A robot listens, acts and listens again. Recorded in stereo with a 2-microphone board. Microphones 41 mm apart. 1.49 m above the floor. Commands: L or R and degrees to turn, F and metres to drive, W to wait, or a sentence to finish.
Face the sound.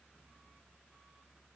W
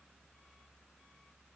W
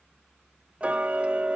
R30
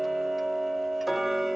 Facing the ticking.